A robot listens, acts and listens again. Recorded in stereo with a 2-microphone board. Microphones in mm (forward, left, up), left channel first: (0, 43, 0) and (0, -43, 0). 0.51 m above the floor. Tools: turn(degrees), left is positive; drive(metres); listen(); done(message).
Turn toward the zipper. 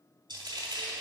listen()
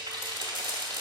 listen()
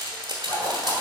turn(degrees=55)
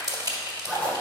turn(degrees=10)
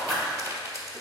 done("Facing the zipper, 1 to 2 m away.")